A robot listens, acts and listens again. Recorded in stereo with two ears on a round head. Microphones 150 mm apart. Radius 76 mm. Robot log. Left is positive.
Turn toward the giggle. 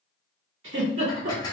cmd yaw -90
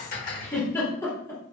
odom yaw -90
note: So it is at 15° left.
cmd yaw +15
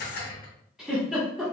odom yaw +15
end: Facing the giggle.